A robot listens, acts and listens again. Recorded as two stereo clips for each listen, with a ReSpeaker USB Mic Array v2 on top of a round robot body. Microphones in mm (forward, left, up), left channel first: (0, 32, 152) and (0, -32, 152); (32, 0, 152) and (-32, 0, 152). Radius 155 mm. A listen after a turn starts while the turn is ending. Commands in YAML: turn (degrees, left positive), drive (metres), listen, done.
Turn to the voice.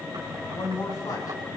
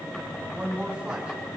turn: 110
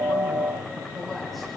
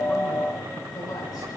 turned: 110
listen: true
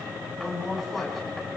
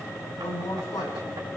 done: "Found it: a woman speaking, straight ahead, over 4 m away."